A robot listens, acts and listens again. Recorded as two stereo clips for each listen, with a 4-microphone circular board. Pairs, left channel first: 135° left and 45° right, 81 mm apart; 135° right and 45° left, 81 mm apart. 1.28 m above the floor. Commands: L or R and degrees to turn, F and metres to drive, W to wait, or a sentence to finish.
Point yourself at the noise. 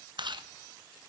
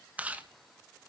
R25
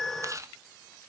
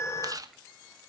Facing the chewing, 1 to 2 m away.